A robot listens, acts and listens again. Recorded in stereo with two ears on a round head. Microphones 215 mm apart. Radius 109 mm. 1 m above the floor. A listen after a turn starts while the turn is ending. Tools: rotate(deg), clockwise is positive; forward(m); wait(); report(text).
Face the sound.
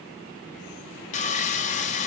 rotate(-30)
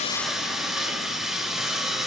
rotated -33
report("Found it: sawing, straight ahead, 1 to 2 m away.")